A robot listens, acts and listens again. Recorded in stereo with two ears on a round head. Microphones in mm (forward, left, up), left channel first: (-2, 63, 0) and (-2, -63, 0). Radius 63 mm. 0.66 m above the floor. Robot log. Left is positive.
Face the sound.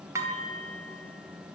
note: The dishes clattering: about 20° right or 160° right.
cmd yaw -20
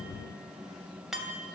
end: Found it: dishes clattering, straight ahead, 2 to 4 m away.